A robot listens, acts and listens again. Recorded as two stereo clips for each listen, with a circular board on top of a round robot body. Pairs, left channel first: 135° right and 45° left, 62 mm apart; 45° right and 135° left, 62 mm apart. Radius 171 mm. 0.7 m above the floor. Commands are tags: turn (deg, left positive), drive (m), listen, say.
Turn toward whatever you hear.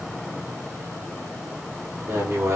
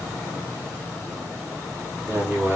<turn deg="80"/>
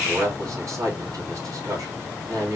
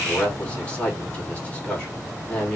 <turn deg="20"/>
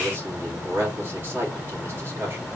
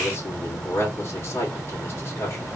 <say>Found it: a man speaking, straight ahead.</say>